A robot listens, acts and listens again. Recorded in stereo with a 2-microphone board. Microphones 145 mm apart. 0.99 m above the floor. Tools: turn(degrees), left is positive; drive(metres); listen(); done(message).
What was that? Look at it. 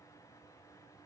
listen()
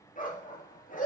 turn(degrees=90)
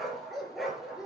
done("Found it: a dog barking, straight ahead, over 4 m away.")